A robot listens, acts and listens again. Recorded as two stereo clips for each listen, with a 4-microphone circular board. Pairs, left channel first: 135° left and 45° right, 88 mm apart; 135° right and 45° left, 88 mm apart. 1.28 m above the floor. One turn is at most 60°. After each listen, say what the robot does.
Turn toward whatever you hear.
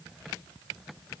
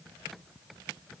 Keep listening.
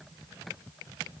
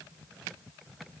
Keep listening.
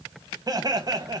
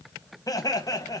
Turn 60° right.
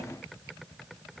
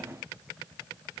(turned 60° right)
Turn 30° right.
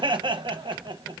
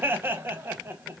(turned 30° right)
Turn 20° right.
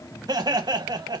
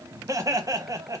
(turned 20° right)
Facing the laughter.